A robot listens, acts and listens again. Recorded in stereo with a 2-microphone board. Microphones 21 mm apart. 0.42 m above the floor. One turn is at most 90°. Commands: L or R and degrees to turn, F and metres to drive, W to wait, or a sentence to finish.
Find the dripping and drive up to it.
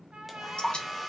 L60
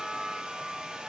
W
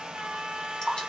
L45
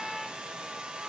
W
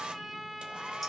F1.0
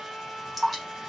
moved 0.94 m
F1.0
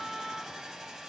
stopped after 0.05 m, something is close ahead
W
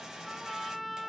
W
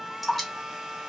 I am next to the dripping.